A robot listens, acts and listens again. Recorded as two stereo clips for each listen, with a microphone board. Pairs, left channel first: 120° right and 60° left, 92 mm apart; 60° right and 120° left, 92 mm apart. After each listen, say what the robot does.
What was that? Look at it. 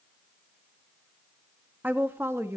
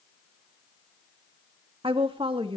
Turn 120° left.
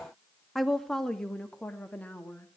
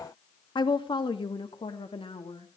Turn 50° right.
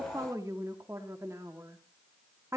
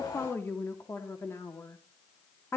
Facing the woman speaking, 2 to 4 m away.